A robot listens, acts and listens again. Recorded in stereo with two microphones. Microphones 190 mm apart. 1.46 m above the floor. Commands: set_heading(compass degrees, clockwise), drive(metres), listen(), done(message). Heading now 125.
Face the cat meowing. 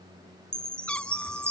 set_heading(95)
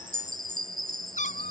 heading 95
set_heading(315)
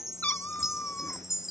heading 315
set_heading(305)
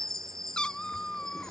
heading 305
done("Found it: a cat meowing, straight ahead.")